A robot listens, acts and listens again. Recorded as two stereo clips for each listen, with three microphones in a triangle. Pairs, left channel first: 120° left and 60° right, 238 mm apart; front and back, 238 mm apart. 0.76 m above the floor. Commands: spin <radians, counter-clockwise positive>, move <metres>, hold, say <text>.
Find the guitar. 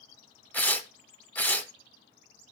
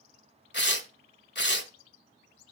hold
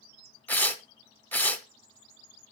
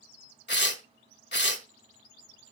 hold
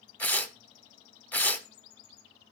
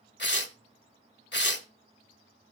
say I can't make out a guitar to turn to.